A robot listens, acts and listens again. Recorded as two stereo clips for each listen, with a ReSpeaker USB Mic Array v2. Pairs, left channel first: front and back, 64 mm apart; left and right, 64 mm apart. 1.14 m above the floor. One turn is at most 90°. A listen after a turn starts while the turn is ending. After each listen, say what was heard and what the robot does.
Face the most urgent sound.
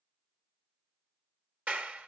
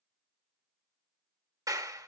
Keep listening.
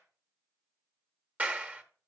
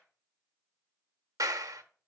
Keep listening.
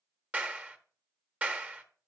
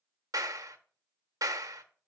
I can't make out anything urgent, only a clap.